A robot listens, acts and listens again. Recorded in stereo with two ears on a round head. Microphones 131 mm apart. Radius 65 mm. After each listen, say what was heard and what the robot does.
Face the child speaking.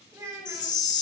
The child speaking: about 20° right or 160° right. Turn 20° right.
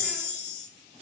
Keep listening.
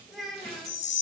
Found it: a child speaking, straight ahead, 1 to 2 m away.